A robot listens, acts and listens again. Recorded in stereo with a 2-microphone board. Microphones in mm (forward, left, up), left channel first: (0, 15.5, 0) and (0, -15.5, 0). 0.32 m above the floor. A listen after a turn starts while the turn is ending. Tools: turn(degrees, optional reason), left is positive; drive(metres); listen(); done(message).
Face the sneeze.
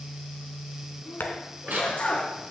turn(degrees=40, reason="The sneeze: about 40° left or 140° left.")
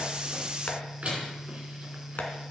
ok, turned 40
listen()
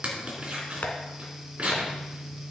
done("I heard a sneeze, but can't make it out now. It was about straight ahead or 100° left.")